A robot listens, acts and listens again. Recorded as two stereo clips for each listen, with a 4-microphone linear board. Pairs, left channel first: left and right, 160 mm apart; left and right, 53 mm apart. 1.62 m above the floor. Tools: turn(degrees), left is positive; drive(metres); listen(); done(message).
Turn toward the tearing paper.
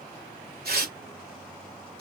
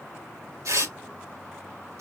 turn(degrees=-90)
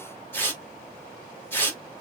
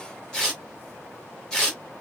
turn(degrees=15)
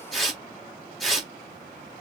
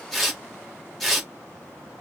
done("Found it: tearing paper, straight ahead, 2 to 4 m away.")